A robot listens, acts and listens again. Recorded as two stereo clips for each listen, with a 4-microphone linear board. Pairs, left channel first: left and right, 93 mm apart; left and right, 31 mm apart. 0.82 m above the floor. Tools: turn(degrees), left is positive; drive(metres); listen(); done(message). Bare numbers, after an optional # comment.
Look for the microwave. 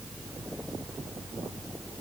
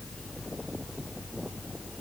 listen()
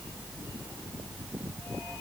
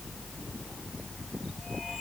listen()
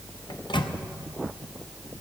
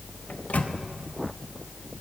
# The microwave: about 60° left or 120° left.
turn(60)
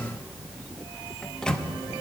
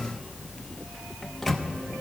# So it is at 10° left.
turn(10)
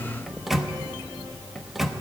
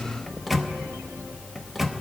done("Found it: a microwave, straight ahead.")